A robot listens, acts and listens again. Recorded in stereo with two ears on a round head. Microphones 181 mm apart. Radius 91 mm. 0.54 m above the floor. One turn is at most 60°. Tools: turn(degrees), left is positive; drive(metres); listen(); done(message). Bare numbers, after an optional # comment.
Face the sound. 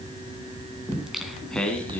turn(30)
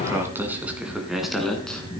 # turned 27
turn(30)
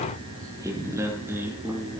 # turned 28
# So it is at 10° right.
turn(-10)
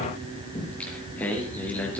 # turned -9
# The singing is now 10° left.
turn(10)
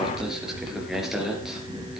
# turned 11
done("Found it: singing, straight ahead.")